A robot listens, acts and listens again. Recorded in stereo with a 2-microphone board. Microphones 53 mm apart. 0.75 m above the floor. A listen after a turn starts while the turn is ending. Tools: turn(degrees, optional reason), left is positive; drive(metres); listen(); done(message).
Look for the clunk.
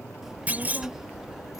turn(degrees=-30, reason="The clunk: about 30° right or 150° right.")
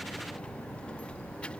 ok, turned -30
listen()
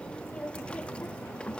done("I heard a clunk, but can't make it out now. It was about straight ahead or 120° right.")